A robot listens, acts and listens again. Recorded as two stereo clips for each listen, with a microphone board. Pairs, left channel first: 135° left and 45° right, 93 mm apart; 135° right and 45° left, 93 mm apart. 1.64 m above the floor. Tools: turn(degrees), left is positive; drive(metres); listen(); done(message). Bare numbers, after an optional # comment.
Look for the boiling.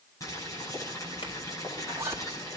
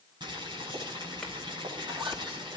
# The boiling: 80° left.
turn(80)
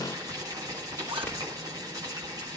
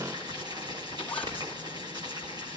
done("Facing the boiling.")